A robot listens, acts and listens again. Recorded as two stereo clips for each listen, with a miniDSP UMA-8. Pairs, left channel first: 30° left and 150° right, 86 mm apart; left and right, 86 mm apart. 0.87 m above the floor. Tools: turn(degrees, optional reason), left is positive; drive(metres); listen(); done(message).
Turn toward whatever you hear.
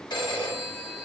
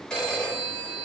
turn(degrees=10, reason="The phone ringing: 10° left.")
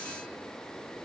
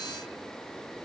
listen()
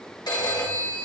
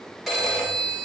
done("Facing the phone ringing.")